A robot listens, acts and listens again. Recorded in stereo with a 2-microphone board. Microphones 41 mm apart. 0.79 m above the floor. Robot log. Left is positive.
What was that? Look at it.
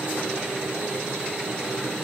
cmd idle
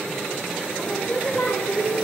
note: The singing: about 60° left or 120° left.
cmd yaw +60
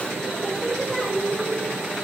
end: Facing the singing.